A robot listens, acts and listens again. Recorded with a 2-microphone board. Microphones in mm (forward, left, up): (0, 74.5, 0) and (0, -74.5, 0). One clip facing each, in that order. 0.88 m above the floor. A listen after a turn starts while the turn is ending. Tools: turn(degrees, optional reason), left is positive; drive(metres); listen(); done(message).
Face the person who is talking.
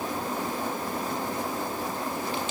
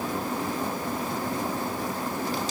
listen()
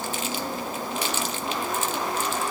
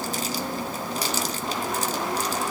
listen()
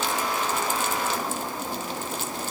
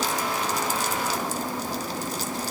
done("I can't make out anyone speaking.")